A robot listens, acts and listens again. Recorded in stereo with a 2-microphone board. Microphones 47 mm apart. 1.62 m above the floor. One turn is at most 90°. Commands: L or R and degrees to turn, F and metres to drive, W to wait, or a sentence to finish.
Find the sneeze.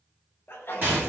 L55
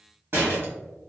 W
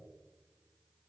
I heard a sneeze, but can't make it out now. It was about straight ahead or 70° left.